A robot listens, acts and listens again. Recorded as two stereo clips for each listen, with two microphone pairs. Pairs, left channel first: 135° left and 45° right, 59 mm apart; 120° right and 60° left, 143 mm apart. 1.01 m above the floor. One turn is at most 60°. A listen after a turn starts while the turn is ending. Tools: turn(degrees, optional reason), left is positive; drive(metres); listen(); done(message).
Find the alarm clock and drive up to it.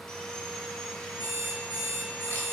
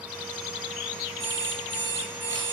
turn(degrees=60, reason="The alarm clock: 160° left.")
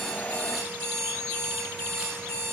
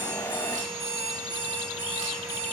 turn(degrees=60, reason="The alarm clock is now 105° left.")
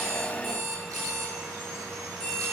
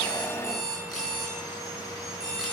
turn(degrees=40, reason="The alarm clock is now 40° left.")
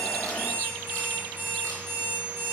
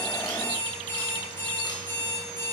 drive(metres=1.0)
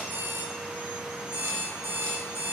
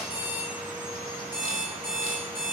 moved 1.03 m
turn(degrees=10, reason="The alarm clock is now 10° left.")
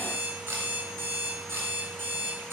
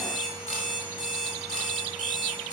drive(metres=1.0)
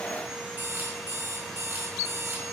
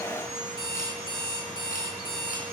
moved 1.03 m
drive(metres=1.0)
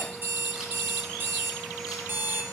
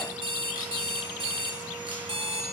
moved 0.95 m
drive(metres=1.0)
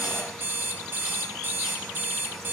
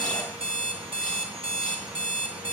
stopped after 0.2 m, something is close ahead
done("I am next to the alarm clock.")